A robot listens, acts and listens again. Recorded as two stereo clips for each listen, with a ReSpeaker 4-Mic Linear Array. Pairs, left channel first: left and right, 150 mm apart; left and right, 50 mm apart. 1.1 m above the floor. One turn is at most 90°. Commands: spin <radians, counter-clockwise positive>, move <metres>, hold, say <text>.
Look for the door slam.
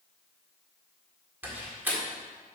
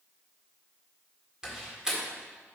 spin -0.52
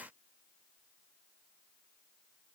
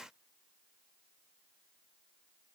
hold
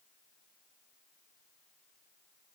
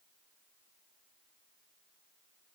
say I heard a door slam, but can't make it out now. It was about 15° left or 135° right.